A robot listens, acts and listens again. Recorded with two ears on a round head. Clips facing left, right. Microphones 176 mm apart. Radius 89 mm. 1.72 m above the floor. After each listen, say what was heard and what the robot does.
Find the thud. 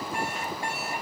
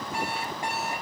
Keep listening.
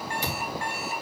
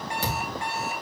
The thud: about 45° right or 135° right. Turn 45° right.
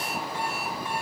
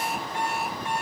Keep listening.
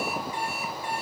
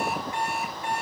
I heard a thud, but can't make it out now. It was about straight ahead or 90° right.